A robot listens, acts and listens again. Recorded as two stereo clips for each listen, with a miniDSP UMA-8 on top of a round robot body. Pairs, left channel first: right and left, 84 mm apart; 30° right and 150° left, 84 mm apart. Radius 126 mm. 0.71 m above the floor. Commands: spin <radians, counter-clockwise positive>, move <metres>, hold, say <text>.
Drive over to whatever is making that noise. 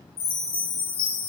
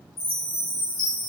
spin -1.05
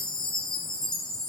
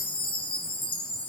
move 1.0
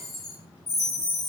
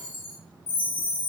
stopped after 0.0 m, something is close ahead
say Something is in my way. I am facing the chime but have not reached it.